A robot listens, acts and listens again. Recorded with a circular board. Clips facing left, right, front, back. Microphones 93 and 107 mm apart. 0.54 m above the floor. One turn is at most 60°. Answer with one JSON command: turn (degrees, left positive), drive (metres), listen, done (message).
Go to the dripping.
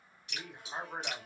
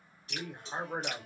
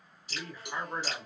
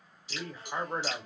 {"turn": -40}
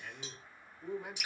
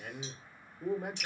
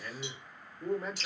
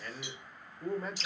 {"turn": 10}
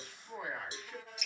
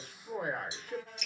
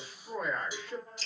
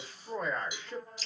{"drive": 1.0}
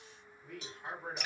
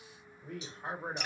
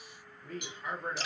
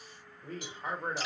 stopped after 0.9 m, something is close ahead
{"done": "Arrived at the dripping, straight ahead."}